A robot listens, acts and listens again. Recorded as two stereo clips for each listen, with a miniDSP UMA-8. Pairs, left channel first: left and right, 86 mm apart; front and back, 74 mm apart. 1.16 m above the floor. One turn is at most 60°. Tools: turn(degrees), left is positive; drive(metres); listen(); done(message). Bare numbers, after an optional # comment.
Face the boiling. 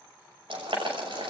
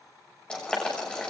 # The boiling: 80° right.
turn(-60)
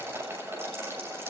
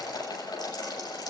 # The boiling is now 25° right.
turn(-25)
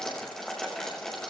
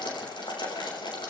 # The boiling is now 10° left.
turn(10)
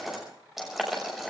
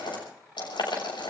done("Found it: boiling, straight ahead.")